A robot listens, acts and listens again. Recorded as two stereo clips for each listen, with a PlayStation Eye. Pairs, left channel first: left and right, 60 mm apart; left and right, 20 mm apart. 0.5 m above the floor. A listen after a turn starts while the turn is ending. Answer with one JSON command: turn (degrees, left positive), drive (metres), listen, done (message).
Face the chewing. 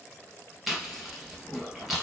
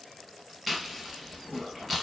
{"turn": 30}
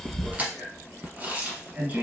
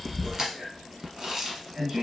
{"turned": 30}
{"turn": -30}
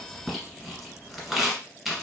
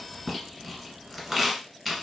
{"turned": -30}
{"done": "Facing the chewing."}